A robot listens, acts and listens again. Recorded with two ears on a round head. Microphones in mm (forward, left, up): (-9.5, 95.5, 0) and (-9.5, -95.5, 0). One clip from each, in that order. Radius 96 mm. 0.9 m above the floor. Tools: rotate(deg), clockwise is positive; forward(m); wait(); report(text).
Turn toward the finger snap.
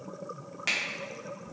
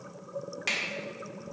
rotate(-30)
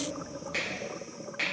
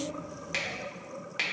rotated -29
rotate(30)
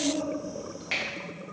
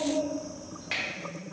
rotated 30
report("Found it: a finger snap, straight ahead.")